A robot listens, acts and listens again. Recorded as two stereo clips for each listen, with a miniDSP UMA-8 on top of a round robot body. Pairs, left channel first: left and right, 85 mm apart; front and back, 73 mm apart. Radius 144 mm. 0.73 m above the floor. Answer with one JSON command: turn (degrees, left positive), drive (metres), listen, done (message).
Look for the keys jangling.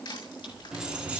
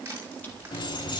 {"turn": -15}
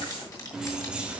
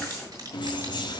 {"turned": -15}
{"turn": -15}
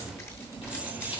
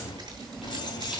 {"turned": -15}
{"turn": -20}
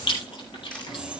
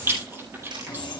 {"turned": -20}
{"turn": -10}
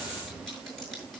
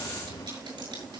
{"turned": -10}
{"listen": true}
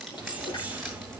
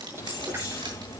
{"turn": -20}
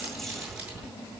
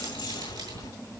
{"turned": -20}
{"done": "Found it: keys jangling, straight ahead, 2 to 4 m away."}